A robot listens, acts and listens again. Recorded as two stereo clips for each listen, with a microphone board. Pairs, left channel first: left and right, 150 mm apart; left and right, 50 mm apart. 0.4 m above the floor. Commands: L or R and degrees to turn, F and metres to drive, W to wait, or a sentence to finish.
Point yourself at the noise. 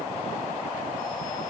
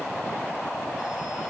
W
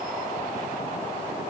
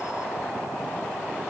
W
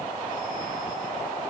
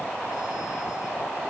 I can't make out anything.